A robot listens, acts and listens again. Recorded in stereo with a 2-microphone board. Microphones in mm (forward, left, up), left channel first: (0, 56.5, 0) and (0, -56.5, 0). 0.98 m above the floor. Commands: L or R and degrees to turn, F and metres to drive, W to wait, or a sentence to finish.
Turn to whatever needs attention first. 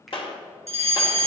R65
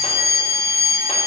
R40
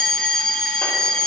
Found it: a fire alarm, straight ahead, 2 to 4 m away.